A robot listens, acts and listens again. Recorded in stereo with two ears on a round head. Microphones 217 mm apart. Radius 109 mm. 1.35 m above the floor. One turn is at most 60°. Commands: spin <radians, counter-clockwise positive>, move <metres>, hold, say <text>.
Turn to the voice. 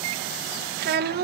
spin -0.70
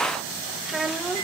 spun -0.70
say Facing the child speaking, 1 to 2 m away.